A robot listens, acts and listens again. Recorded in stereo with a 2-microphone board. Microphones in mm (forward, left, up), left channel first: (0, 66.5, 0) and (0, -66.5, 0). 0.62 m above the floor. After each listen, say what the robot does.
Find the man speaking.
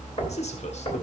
Turn 55° left.
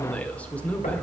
Turn 10° left.
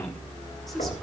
Found it: a man speaking, straight ahead, 1 to 2 m away.